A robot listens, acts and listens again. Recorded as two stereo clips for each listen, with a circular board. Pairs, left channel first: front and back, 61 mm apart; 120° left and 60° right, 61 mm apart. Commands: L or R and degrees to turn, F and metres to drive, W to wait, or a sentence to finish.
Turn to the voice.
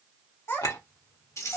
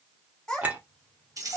L45
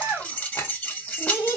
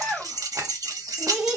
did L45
L15
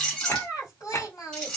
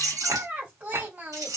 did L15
Facing the child speaking, 1 to 2 m away.